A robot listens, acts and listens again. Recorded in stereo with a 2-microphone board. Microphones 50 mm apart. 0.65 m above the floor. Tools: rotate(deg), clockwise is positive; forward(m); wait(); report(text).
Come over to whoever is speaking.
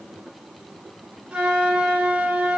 wait()
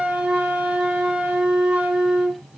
wait()
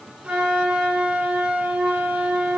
report("I can't make out anyone speaking to turn to.")